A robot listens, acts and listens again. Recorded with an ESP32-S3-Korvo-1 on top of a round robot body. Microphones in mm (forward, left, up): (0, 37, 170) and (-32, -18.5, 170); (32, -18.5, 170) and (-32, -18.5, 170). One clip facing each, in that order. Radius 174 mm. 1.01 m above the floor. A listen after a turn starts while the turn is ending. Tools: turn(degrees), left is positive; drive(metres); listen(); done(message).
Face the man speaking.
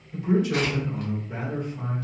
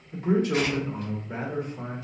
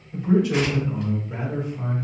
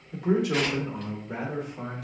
turn(degrees=175)
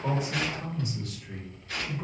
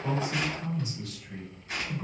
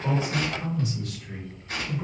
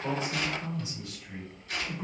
turn(degrees=15)
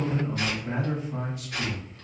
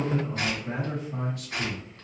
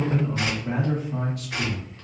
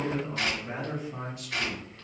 turn(degrees=-15)
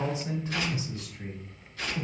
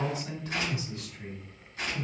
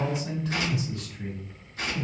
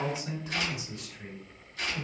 done("Facing the man speaking, 2 to 4 m away.")